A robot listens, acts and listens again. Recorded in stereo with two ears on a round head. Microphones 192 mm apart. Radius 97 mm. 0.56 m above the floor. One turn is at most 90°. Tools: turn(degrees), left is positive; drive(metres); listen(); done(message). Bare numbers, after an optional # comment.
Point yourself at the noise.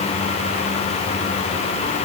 listen()
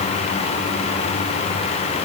listen()
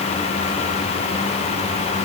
done("I can't make out anything to turn to.")